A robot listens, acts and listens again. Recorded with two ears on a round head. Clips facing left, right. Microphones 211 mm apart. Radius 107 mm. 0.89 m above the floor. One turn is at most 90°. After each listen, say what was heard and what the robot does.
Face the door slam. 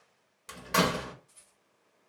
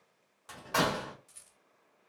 The door slam: about 30° left or 150° left. Turn 30° left.
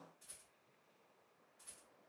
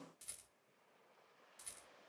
Keep listening.
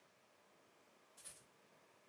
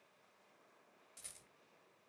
I heard a door slam, but can't make it out now. It was about straight ahead or 120° left.